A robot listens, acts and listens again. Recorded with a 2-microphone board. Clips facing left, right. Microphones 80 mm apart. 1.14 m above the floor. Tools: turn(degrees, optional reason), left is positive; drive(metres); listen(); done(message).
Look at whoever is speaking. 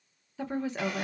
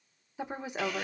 turn(degrees=-15, reason="The woman speaking: about 15° right or 165° right.")
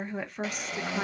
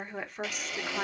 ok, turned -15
done("Found it: a woman speaking, straight ahead, under 1 m away.")